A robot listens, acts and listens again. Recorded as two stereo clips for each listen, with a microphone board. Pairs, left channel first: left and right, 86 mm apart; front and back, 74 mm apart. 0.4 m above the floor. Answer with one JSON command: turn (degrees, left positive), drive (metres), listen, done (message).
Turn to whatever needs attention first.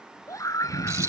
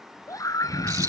{"turn": 40}
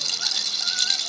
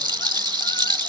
{"listen": true}
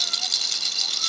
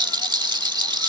{"listen": true}
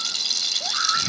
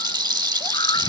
{"done": "I heard a scream from this way, but can't make it out now."}